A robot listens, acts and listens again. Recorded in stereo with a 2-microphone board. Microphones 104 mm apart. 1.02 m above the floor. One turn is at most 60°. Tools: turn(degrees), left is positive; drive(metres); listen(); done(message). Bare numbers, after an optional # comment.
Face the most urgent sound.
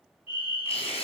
# The fire alarm: about 60° left or 120° left.
turn(60)
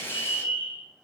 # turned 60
# So it is at 55° left.
turn(55)
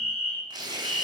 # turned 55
# The fire alarm is now 15° right.
turn(-15)
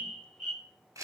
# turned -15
done("Facing the fire alarm.")